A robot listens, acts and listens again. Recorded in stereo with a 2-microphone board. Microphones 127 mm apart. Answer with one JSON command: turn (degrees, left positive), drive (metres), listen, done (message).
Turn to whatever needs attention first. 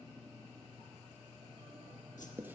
{"listen": true}
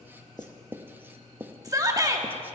{"turn": -30}
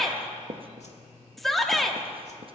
{"done": "Facing the shout, 1 to 2 m away."}